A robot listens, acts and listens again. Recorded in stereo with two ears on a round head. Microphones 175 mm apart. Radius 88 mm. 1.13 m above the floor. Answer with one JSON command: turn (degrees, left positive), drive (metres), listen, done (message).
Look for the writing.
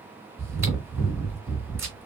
{"listen": true}
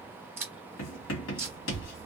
{"turn": 70}
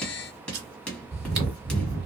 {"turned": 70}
{"done": "Found it: writing, straight ahead."}